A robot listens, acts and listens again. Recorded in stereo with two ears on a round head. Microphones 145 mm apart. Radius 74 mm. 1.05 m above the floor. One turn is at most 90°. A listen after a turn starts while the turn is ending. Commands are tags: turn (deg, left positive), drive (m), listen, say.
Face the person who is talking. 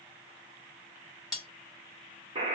<listen/>
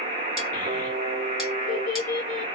<turn deg="50"/>
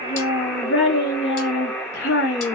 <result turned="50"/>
<turn deg="75"/>
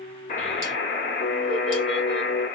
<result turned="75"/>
<listen/>
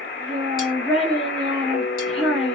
<say>Facing the child speaking.</say>